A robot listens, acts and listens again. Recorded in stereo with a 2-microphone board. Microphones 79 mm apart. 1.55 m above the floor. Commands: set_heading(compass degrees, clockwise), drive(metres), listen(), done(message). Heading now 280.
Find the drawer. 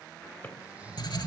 set_heading(260)
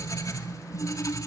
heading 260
listen()
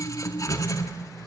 listen()
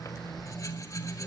done("I heard a drawer, but can't make it out now. It was about straight ahead or 140° left.")